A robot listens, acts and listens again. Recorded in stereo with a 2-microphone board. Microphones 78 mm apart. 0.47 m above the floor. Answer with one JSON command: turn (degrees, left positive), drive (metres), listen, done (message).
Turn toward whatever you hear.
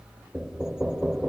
{"turn": -30}
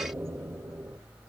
{"turn": -140}
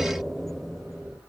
{"done": "Found it: knocking, straight ahead, 1 to 2 m away."}